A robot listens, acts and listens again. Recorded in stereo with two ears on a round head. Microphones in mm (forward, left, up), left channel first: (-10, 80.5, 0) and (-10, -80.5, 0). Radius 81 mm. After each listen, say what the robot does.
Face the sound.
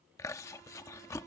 Turn 15° left.
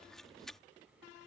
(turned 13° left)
Found it: chewing, straight ahead.